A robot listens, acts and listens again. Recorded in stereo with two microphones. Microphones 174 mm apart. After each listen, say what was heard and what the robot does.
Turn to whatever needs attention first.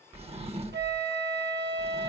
Keep listening.
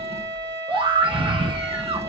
The scream: about 30° right or 150° right. Turn 30° right.
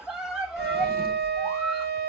Found it: a scream, straight ahead.